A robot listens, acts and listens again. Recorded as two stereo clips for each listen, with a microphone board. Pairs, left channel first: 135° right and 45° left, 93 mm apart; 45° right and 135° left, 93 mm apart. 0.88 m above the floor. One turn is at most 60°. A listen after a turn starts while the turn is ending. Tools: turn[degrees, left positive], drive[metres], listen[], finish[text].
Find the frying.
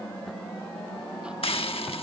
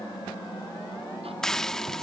Thought: The frying: 130° right.
Action: turn[-60]
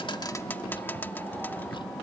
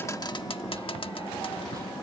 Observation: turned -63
Thought: The frying is now 65° right.
Action: turn[-60]
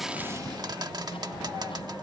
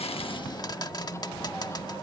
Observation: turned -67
Action: finish[Facing the frying.]